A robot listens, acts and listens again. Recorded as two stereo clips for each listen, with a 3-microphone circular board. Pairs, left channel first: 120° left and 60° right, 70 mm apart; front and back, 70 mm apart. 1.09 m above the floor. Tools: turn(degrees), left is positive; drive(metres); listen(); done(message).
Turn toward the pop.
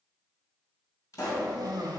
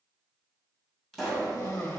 turn(degrees=85)
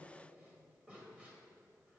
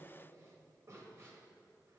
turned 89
done("I heard a pop from this way, but can't make it out now.")